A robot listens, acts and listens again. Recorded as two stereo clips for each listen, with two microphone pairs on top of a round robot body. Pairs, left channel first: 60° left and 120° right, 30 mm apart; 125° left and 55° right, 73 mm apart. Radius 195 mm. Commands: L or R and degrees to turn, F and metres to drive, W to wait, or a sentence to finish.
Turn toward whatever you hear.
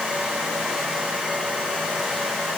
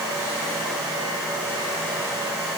W
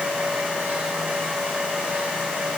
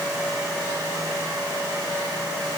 W
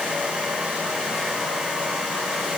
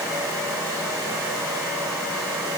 I can't make out anything to turn to.